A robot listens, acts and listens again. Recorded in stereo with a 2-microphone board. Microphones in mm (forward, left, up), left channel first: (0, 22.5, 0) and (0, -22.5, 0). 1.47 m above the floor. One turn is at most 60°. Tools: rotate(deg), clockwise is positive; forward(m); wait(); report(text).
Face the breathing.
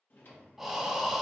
rotate(30)
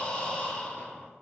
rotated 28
rotate(-25)
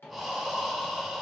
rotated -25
report("Facing the breathing, under 1 m away.")